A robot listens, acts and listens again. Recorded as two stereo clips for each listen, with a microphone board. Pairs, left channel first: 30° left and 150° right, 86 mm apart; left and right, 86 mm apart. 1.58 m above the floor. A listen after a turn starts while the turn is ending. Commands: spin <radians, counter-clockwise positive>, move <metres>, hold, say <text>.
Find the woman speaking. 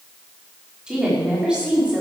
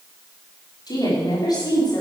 spin 2.36
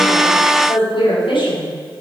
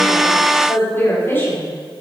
spin 0.44
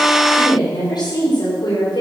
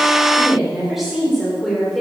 say Facing the woman speaking.